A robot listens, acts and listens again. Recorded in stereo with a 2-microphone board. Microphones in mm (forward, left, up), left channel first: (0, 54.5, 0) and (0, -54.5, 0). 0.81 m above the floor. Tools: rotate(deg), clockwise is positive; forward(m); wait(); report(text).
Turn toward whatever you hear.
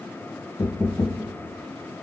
rotate(-40)
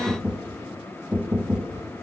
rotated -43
report("Facing the knocking, under 1 m away.")